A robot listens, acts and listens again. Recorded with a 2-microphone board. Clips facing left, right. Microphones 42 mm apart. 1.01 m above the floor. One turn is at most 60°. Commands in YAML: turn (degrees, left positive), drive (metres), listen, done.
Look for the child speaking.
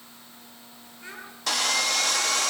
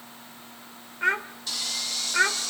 turn: -60
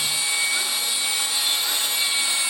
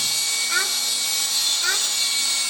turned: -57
turn: -50
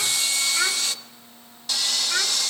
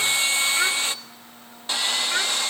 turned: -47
done: "Found it: a child speaking, straight ahead, 1 to 2 m away."